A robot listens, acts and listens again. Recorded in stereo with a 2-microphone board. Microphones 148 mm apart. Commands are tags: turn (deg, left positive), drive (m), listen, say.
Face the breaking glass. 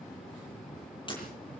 <turn deg="35"/>
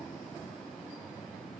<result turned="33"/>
<listen/>
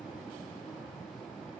<say>I heard breaking glass, but can't make it out now. It was about straight ahead or 115° left.</say>